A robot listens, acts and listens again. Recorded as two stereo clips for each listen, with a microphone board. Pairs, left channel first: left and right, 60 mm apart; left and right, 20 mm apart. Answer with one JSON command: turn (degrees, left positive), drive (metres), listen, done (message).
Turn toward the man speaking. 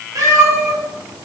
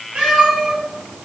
{"listen": true}
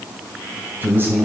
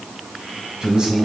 {"turn": -35}
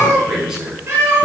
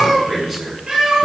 {"turn": -10}
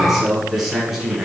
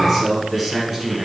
{"done": "Facing the man speaking."}